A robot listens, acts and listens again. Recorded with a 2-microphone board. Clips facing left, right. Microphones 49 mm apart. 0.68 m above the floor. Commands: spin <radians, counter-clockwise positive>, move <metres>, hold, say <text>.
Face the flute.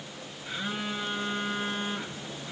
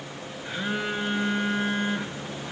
hold
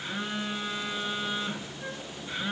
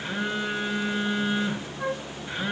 spin -1.57
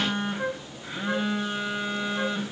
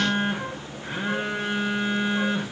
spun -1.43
spin -0.17
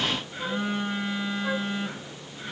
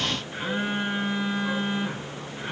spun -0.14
hold
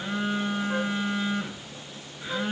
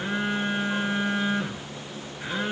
say Facing where the flute came from. I can't hear it now.